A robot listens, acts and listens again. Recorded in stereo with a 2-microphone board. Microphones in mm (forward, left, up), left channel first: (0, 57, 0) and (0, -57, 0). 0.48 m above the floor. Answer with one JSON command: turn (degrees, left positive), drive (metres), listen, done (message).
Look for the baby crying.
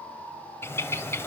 {"listen": true}
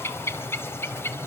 {"listen": true}
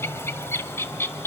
{"done": "I can't make out a baby crying to turn to."}